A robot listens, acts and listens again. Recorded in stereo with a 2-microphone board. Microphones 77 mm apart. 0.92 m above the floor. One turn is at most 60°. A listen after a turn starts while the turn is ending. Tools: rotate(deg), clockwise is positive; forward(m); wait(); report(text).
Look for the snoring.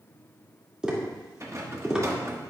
wait()
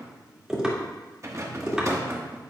wait()
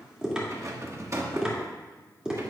report("I can't make out snoring to turn to.")